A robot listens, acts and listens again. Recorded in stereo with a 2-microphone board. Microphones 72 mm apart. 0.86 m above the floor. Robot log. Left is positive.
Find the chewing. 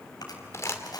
note: The chewing: about 65° left or 115° left.
cmd yaw +65
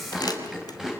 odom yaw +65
end: Found it: chewing, straight ahead.